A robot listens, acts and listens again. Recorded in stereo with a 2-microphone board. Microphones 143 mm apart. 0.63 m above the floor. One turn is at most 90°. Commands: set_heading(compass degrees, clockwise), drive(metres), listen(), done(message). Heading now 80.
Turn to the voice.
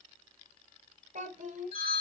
set_heading(145)
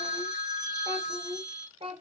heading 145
set_heading(185)
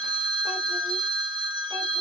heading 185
listen()
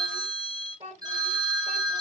set_heading(225)
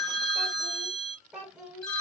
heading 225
done("Facing the child speaking.")